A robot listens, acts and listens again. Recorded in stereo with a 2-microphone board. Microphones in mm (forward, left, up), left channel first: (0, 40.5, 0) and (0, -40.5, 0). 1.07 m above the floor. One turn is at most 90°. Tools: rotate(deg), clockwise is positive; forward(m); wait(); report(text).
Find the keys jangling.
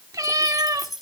rotate(-30)
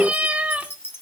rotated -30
rotate(-90)
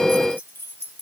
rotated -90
rotate(-30)
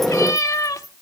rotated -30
wait()
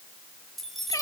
report("Found it: keys jangling, straight ahead, over 4 m away.")